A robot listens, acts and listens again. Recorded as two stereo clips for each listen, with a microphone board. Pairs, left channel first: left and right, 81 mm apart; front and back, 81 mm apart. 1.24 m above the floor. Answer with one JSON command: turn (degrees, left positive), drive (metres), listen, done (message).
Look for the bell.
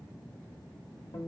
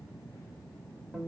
{"listen": true}
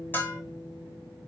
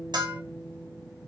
{"turn": 155}
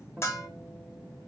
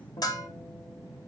{"turn": 35}
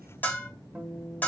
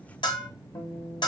{"turn": 20}
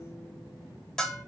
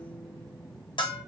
{"done": "Facing the bell."}